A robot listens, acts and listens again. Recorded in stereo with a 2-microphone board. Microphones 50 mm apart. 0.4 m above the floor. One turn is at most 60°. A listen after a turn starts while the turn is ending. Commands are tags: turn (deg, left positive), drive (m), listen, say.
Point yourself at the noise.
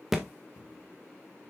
<turn deg="-30"/>
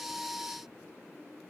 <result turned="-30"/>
<listen/>
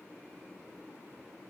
<say>I heard a thud, but can't make it out now. It was about 25° left or 145° right.</say>